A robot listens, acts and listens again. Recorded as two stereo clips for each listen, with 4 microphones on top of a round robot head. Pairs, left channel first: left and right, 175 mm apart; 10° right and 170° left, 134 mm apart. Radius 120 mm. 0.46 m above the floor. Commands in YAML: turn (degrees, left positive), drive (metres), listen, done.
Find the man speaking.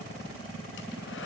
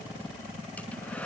listen: true
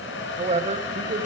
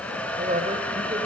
turn: -135
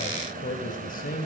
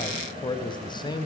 turn: 50
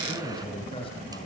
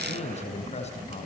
turn: 25
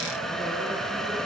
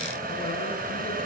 listen: true
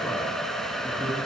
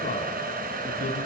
listen: true
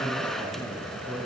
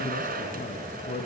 done: "Facing the man speaking, over 4 m away."